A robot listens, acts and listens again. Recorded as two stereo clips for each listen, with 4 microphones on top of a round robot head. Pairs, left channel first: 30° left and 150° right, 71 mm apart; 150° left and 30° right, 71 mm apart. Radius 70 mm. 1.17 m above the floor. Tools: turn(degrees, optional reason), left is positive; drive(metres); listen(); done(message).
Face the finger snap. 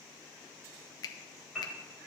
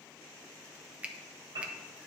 turn(degrees=40, reason="The finger snap: 40° left.")
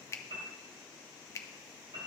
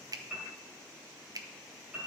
turn(degrees=-10, reason="The finger snap is now 10° right.")
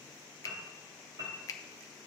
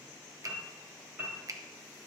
done("Facing the finger snap.")